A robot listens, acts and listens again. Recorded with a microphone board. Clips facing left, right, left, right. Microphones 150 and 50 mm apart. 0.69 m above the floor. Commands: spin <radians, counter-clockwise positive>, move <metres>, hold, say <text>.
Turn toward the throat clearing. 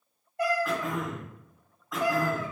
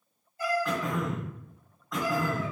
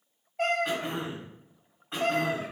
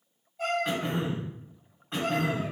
spin 0.52
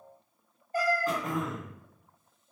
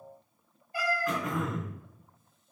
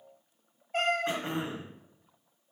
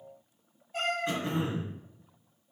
spin 2.53
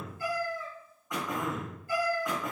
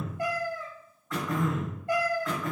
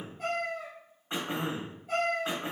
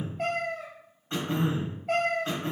spin 0.35
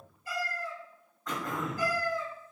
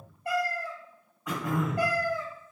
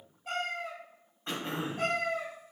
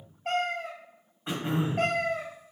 spin -0.17
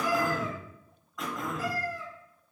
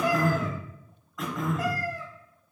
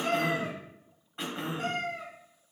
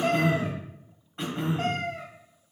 say Facing the throat clearing.